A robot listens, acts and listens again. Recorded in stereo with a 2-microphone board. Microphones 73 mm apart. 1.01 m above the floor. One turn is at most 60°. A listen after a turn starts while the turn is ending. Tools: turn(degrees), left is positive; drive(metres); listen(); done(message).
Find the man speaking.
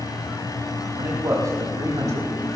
turn(degrees=-55)
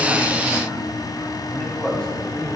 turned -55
turn(degrees=10)
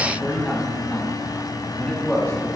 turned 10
turn(degrees=10)
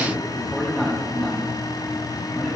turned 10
done("Facing the man speaking, over 4 m away.")